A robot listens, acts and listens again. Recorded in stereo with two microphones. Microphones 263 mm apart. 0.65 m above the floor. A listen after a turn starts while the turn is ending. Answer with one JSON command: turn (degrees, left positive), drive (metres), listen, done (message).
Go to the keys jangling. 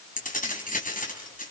{"turn": 30}
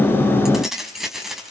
{"drive": 1.0}
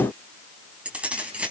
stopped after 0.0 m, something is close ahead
{"done": "Something is in my way. I am facing the keys jangling but have not reached it."}